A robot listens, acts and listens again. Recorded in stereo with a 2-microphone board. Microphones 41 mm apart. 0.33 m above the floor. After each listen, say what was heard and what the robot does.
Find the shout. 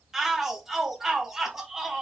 Turn 30° right.
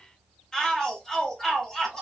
So it is at 20° left. Turn 20° left.
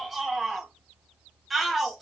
Found it: a shout, straight ahead.